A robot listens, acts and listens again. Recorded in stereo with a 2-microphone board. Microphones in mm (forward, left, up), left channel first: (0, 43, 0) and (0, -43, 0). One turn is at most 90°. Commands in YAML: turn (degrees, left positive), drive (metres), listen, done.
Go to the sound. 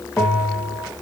turn: 30
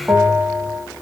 turn: -20
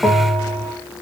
drive: 1.0
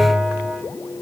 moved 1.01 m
drive: 1.0
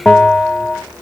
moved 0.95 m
drive: 1.0
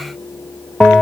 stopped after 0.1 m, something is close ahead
done: "Arrived at the bell, straight ahead."